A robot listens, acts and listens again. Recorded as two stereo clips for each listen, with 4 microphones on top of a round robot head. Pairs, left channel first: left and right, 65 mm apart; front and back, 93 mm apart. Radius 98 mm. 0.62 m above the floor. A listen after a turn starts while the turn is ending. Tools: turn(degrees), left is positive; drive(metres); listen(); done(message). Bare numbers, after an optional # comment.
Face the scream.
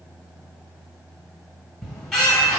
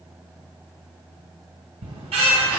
listen()
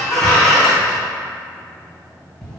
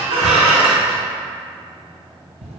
listen()
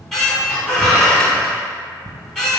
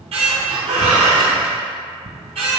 done("I can't make out a scream, only a squeak.")